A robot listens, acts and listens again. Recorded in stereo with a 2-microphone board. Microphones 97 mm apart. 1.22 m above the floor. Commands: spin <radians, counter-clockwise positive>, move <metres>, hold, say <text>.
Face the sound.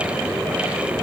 hold
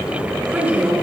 spin -0.44
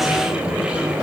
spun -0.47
hold
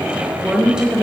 spin -0.52
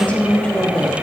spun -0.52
spin 0.17
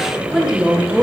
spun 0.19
spin -0.26
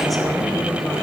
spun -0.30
hold
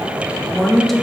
say Found it: a woman speaking, straight ahead, 2 to 4 m away.